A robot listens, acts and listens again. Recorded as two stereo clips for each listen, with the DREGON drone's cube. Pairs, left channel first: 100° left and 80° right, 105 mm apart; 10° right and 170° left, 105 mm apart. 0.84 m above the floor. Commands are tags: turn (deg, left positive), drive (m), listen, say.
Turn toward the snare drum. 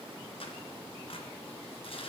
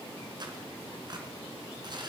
<listen/>
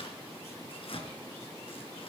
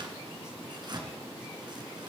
<listen/>
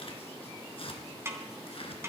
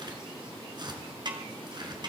<turn deg="-145"/>
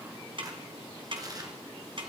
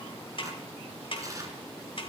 <turn deg="-45"/>
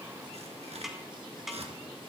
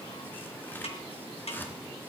<turn deg="10"/>
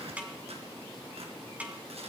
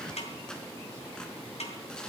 <say>Facing the snare drum.</say>